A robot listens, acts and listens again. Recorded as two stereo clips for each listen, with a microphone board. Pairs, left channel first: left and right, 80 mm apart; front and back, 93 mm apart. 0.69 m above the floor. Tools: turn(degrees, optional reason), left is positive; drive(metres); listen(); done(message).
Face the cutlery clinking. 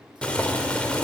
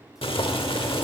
listen()
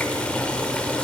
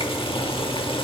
listen()
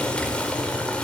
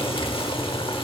done("I can't make out cutlery clinking to turn to.")